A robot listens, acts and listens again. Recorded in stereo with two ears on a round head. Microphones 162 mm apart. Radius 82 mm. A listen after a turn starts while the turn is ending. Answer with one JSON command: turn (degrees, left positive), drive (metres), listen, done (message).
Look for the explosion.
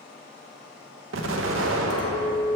{"turn": -90}
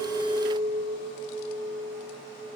{"done": "I heard an explosion from this way, but can't make it out now."}